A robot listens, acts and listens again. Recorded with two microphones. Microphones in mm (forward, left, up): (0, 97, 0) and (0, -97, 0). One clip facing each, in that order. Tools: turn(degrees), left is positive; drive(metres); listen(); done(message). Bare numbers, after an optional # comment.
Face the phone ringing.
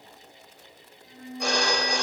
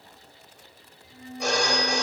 turn(30)
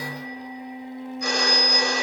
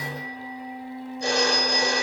# So it is at 30° right.
turn(-30)
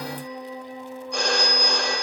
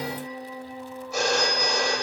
done("Found it: a phone ringing, straight ahead.")